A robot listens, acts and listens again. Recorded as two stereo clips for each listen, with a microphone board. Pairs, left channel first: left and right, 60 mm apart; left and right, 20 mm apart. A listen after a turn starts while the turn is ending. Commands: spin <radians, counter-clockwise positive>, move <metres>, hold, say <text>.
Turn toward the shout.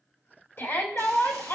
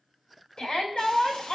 spin 0.79
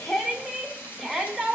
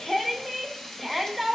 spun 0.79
say Found it: a shout, straight ahead, 1 to 2 m away.